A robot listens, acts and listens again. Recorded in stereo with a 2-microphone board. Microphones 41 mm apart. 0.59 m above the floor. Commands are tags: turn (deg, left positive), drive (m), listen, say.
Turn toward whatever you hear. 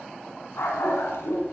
<turn deg="90"/>
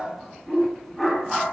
<say>Facing the dog barking, 2 to 4 m away.</say>